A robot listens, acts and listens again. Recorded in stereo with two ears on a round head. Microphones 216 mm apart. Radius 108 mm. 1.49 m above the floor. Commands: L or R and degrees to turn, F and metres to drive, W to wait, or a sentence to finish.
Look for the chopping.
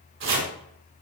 R50
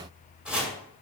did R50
Facing the chopping.